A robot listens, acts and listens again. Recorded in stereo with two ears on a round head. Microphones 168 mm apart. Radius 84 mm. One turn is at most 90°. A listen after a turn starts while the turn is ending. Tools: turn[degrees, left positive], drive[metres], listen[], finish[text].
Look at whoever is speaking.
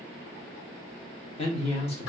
Thought: The man speaking: about 35° left or 145° left.
Action: turn[35]
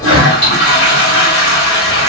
Action: listen[]
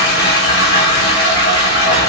Action: listen[]
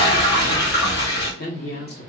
Thought: So it is at 100° left.
Action: turn[90]
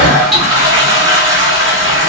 Thought: Nothing new. It was at 10° left.
Action: turn[10]
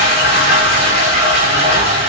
Action: listen[]
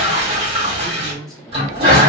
Action: finish[Found it: a man speaking, straight ahead.]